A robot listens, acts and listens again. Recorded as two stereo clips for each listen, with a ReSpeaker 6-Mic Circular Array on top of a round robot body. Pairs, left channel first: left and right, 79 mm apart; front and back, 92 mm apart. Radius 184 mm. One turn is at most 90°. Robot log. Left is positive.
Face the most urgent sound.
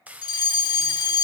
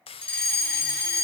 note: The fire alarm: 75° left.
cmd yaw +75
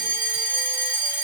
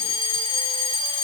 note: The fire alarm is now 20° right.
cmd yaw -20
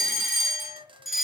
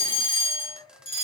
end: Found it: a fire alarm, straight ahead, over 4 m away.